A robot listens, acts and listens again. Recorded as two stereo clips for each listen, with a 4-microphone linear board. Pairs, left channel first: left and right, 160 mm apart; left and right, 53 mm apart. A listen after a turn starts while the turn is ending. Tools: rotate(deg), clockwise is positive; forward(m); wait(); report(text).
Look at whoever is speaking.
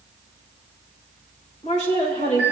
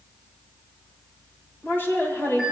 rotate(-45)
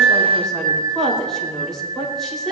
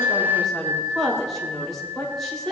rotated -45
report("Facing the woman speaking, 2 to 4 m away.")